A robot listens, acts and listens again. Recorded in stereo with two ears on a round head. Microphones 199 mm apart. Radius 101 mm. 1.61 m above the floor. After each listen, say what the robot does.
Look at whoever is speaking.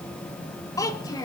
Turn 20° left.
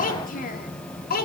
Turn 135° left.
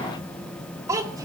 Turn 15° right.
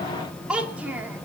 Found it: a child speaking, straight ahead, 2 to 4 m away.